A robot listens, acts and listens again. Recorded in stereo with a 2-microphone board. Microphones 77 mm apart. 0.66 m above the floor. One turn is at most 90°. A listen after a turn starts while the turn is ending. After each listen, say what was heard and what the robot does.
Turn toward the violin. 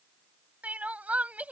Keep listening.
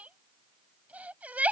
Keep listening.
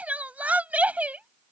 I can't make out a violin, only crying.